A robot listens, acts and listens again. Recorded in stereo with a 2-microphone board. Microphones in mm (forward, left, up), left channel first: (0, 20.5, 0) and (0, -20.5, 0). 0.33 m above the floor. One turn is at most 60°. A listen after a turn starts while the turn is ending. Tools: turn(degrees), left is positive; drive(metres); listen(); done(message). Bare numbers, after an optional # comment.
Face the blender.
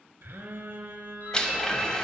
# The blender: about 20° left or 160° left.
turn(20)
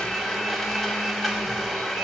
done("Facing the blender.")